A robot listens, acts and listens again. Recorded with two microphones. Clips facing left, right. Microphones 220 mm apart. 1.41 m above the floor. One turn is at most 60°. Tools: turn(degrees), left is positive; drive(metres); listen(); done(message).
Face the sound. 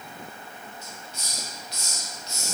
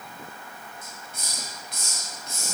turn(degrees=-50)
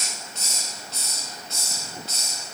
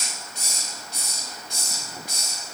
turn(degrees=-15)
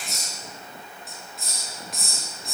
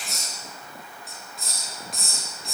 done("Found it: a hiss, straight ahead.")